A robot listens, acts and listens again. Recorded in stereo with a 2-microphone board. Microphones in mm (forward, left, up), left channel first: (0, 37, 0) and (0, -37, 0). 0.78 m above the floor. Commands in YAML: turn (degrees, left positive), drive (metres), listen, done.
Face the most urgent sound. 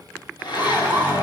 turn: -30
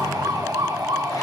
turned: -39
turn: -115
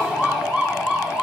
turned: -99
turn: -15
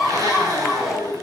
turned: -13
done: "Found it: a siren, straight ahead."